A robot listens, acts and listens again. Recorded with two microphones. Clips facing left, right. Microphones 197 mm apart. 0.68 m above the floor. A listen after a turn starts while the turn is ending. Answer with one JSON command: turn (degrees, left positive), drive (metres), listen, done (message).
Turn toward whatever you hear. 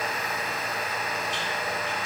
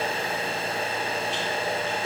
{"listen": true}
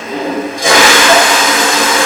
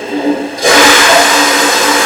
{"turn": -70}
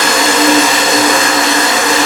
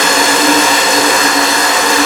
{"done": "Facing the toilet flushing, 1 to 2 m away."}